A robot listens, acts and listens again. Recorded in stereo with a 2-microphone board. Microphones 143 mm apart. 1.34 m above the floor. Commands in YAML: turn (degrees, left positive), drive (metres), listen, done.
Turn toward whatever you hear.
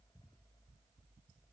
listen: true
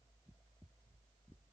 listen: true
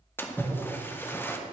turn: 15
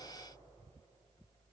listen: true
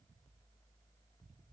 done: "I heard a splash, but can't make it out now. It was about straight ahead or 150° left."